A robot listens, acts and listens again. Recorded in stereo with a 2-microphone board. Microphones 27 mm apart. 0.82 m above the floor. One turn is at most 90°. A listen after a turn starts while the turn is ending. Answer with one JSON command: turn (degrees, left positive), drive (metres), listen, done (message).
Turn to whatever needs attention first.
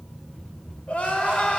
{"turn": 60}
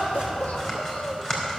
{"turn": 60}
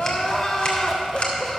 {"turn": 20}
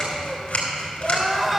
{"done": "Facing the crying, 1 to 2 m away."}